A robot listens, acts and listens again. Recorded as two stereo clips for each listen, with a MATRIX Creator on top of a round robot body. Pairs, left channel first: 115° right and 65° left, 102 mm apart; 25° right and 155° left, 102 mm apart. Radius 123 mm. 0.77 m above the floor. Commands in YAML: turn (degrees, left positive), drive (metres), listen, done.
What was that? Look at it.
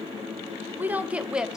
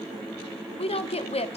turn: -15
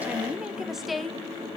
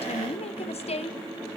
turn: -25
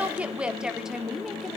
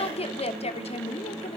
turn: -20
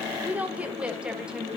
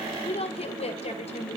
turn: -10
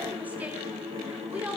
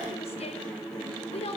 turn: -10
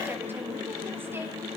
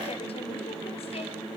listen: true
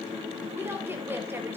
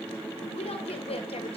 done: "Facing the woman speaking, 2 to 4 m away."